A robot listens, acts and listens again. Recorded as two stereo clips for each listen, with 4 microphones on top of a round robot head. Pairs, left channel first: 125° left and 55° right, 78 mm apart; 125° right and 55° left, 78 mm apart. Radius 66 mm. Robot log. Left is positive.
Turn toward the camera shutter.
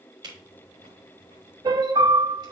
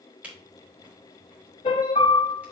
note: The camera shutter: 20° right.
cmd yaw -20
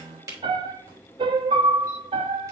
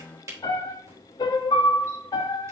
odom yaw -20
end: Facing the camera shutter, 2 to 4 m away.